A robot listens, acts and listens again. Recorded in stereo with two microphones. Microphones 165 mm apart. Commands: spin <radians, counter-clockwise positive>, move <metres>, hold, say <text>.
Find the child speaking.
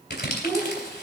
spin 0.26
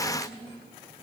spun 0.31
spin 2.44
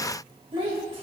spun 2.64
spin -0.61
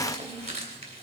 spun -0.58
hold
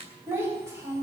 spin -0.35
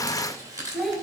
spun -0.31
say Found it: a child speaking, straight ahead.